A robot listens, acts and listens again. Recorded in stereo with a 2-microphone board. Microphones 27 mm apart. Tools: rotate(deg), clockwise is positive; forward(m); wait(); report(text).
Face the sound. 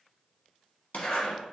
rotate(-60)
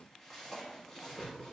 wait()
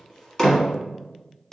rotate(-15)
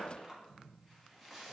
wait()
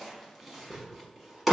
report("Found it: a zipper, straight ahead.")